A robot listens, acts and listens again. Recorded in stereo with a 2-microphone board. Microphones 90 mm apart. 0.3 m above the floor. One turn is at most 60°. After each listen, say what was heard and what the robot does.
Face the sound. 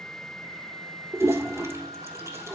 The toilet flushing: about 35° right or 145° right. Turn 35° right.
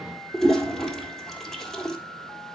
Found it: a toilet flushing, straight ahead, 1 to 2 m away.